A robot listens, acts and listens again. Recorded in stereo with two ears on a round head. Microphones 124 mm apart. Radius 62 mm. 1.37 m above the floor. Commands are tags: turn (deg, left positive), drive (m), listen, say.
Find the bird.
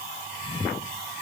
<listen/>
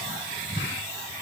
<listen/>
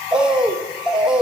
<turn deg="-30"/>
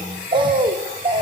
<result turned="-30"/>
<turn deg="-140"/>
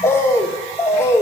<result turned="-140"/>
<turn deg="20"/>
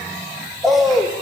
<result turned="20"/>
<say>Found it: a bird, straight ahead.</say>